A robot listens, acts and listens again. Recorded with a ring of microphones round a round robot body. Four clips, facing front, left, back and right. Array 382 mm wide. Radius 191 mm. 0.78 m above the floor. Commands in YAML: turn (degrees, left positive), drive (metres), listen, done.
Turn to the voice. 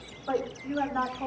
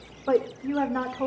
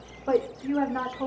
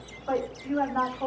turn: 120
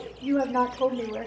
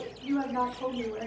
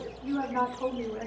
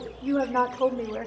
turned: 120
turn: -55
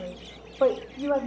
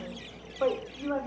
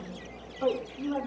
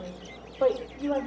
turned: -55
turn: -15
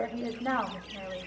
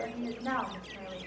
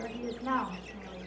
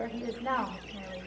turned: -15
done: "Facing the woman speaking."